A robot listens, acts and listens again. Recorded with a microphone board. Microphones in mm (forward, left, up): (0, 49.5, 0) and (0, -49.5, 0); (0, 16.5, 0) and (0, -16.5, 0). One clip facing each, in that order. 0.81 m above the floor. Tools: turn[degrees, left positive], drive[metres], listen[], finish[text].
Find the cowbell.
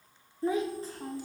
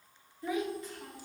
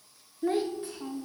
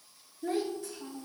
Action: listen[]
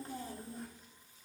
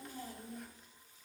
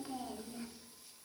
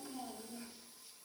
Action: listen[]
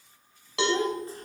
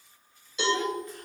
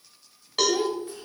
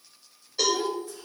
Action: turn[90]
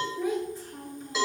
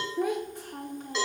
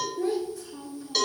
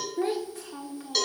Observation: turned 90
Action: finish[Facing the cowbell, 1 to 2 m away.]